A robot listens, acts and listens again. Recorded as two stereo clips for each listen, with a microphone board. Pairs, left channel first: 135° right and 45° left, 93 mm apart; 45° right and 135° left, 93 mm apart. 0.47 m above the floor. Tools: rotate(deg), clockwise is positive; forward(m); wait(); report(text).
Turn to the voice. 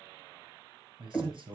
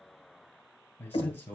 rotate(-20)
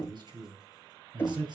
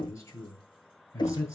rotate(-10)
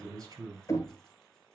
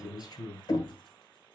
report("Found it: a man speaking, straight ahead, 2 to 4 m away.")